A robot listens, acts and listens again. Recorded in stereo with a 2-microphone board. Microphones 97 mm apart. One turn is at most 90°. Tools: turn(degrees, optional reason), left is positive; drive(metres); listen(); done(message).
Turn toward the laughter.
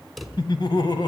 turn(degrees=55, reason="The laughter: about 55° left or 125° left.")
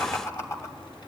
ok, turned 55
turn(degrees=35, reason="So it is at 35° left.")
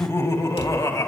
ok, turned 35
turn(degrees=40, reason="The laughter is now 40° left.")
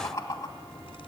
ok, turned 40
turn(degrees=35, reason="The laughter is now 35° left.")
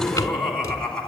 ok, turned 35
turn(degrees=10, reason="The laughter is now 10° left.")
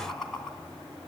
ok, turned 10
done("Facing the laughter, 2 to 4 m away.")